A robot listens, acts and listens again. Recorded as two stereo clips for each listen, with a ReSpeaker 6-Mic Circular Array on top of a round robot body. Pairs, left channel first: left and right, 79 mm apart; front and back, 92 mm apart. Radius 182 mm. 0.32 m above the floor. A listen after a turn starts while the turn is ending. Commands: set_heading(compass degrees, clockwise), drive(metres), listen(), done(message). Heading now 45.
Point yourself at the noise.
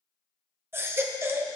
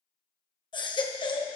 set_heading(75)
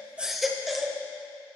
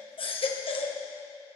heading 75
done("Facing the baby crying, 1 to 2 m away.")